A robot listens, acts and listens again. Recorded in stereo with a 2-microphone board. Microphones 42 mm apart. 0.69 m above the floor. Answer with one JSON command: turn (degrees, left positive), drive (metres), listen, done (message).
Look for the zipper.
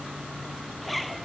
{"turn": 30}
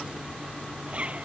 {"turn": -30}
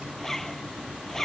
{"turn": 10}
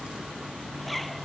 {"done": "Found it: a zipper, straight ahead."}